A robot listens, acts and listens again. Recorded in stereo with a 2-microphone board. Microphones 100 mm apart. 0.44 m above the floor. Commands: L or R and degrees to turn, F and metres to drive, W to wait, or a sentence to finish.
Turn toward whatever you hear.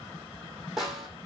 R30
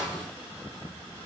L25
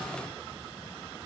W
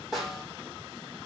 Facing the snare drum.